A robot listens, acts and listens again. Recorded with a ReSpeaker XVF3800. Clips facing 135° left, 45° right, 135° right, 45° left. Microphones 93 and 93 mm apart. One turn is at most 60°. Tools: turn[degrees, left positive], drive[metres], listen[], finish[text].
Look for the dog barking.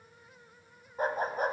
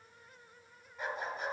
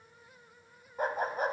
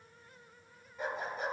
Thought: The dog barking: straight behind.
Action: turn[60]
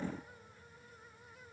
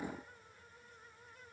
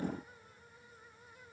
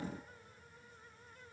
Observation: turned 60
Thought: Nothing new. It was at 120° left.
Action: turn[60]
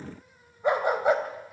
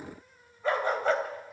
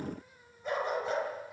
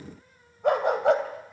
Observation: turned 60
Thought: The dog barking is now 55° left.
Action: turn[55]
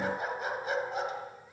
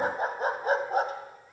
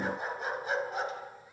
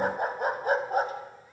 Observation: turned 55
Action: finish[Found it: a dog barking, straight ahead, 2 to 4 m away.]